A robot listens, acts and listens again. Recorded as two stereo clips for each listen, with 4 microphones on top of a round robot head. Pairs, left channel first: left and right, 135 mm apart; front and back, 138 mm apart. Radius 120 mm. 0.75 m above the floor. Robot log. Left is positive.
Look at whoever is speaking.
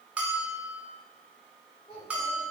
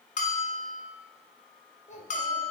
note: The child speaking: 30° left.
cmd yaw +30
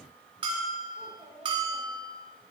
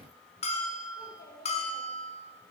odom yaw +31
end: Facing the child speaking, over 4 m away.